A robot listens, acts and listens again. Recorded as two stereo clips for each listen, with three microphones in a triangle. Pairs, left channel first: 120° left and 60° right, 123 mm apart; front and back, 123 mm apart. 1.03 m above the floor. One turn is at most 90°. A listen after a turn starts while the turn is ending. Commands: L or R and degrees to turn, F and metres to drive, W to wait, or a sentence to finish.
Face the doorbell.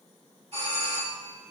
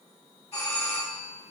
R35
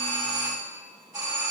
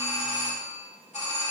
Facing the doorbell, 2 to 4 m away.